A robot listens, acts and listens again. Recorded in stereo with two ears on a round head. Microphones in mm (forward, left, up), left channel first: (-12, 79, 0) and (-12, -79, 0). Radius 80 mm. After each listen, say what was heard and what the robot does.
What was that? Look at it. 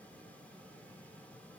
Keep listening.
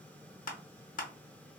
The crushing: about 50° left or 130° left. Turn 50° left.
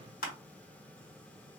So it is at 65° left. Turn 65° left.
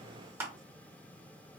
The crushing is now 15° right. Turn 15° right.
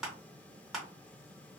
Facing the crushing, under 1 m away.